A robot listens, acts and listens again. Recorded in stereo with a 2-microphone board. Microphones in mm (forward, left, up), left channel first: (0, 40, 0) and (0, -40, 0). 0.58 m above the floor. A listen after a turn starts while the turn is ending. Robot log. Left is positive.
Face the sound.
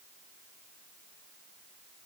cmd idle
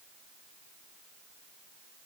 cmd idle
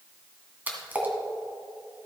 note: The splash: about 20° right or 160° right.
cmd yaw -20
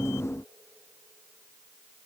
cmd idle
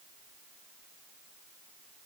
end: I heard a splash, but can't make it out now. It was about straight ahead or 140° right.